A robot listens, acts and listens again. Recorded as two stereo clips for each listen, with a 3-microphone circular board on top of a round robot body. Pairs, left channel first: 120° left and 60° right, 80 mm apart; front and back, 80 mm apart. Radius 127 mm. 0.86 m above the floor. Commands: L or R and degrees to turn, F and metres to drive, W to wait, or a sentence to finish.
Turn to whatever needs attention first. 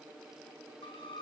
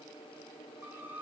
W
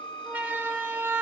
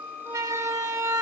R130
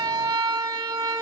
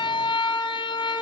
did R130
R20
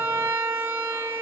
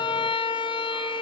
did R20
Facing the siren.